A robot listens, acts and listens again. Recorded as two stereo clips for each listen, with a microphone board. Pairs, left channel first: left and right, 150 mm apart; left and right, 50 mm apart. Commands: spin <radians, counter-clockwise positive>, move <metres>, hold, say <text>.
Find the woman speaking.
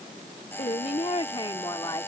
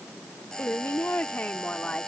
spin 0.44
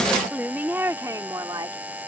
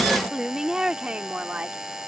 spin -0.52
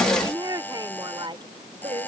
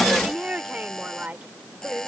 spin -0.70
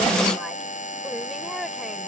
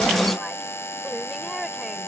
hold
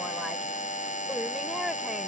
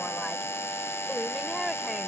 say Facing the woman speaking.